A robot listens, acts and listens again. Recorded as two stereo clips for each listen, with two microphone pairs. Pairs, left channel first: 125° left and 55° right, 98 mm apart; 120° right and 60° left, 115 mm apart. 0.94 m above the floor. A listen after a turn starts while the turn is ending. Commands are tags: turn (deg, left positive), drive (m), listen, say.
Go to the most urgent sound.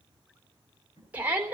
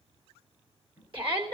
<turn deg="20"/>
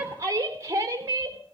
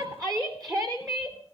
<drive m="1.0"/>
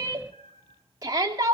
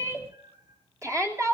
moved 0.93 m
<drive m="1.0"/>
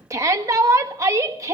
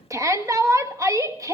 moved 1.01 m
<drive m="1.0"/>
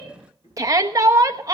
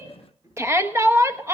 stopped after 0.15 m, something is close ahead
<say>Arrived at the shout, straight ahead.</say>